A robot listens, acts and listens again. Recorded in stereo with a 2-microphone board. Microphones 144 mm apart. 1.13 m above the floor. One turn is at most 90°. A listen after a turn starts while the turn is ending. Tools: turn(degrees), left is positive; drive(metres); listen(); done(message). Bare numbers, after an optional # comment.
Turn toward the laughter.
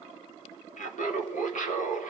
# The laughter: about 70° left or 110° left.
turn(70)
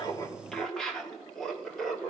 done("Found it: laughter, straight ahead.")